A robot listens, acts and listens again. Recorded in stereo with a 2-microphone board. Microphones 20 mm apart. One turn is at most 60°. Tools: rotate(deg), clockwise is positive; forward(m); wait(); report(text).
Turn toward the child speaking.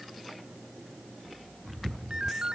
wait()
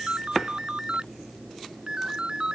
wait()
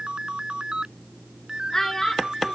rotate(-25)
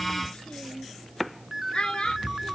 rotate(-60)
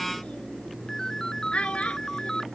rotate(-60)
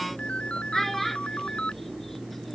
rotate(-10)
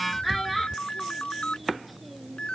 report("Found it: a child speaking, straight ahead.")